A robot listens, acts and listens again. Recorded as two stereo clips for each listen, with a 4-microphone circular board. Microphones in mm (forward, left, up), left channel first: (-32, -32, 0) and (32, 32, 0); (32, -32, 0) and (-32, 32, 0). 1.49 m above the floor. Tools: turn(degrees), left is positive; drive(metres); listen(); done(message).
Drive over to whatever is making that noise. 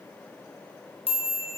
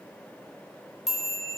turn(degrees=-130)
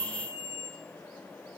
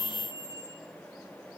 turn(degrees=-10)
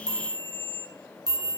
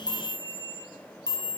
drive(metres=1.0)
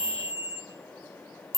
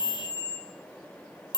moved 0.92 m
drive(metres=1.0)
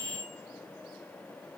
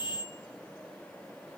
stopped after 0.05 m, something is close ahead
done("I am next to the chime.")